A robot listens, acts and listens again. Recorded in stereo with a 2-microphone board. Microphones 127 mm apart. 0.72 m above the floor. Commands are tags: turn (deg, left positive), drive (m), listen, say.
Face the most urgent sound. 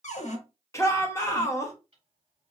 <turn deg="25"/>
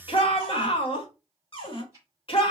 <turn deg="130"/>
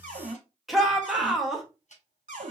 <say>Found it: a shout, straight ahead, 1 to 2 m away.</say>